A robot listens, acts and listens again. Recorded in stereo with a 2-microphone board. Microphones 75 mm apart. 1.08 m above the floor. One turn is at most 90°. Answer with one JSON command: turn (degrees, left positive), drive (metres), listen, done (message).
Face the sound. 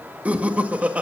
{"turn": -20}
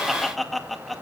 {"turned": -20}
{"done": "Found it: laughter, straight ahead."}